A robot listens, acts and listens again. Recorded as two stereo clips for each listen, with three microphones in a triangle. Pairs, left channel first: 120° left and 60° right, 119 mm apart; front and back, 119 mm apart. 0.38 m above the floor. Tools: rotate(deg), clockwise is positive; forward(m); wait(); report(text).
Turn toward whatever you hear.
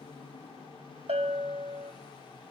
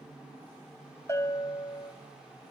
rotate(65)
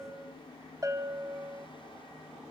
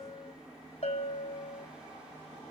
report("Found it: a bell, straight ahead.")